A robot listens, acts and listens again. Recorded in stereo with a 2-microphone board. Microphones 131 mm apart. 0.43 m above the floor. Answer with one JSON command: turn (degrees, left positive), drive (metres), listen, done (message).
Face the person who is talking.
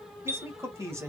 {"turn": -20}
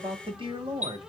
{"turn": -135}
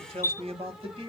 {"turn": -45}
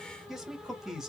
{"done": "Facing the man speaking, 1 to 2 m away."}